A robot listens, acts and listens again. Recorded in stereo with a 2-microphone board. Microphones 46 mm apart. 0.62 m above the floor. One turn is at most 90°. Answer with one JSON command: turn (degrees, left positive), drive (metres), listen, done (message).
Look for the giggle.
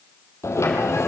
{"listen": true}
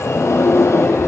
{"listen": true}
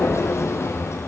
{"done": "I can't make out a giggle to turn to."}